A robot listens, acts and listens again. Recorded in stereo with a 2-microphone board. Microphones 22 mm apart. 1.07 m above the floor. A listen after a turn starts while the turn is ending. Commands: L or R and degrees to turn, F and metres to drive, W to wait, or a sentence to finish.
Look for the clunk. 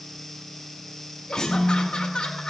L25
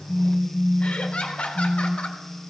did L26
W
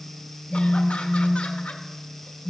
I heard a clunk, but can't make it out now. It was about straight ahead or 130° left.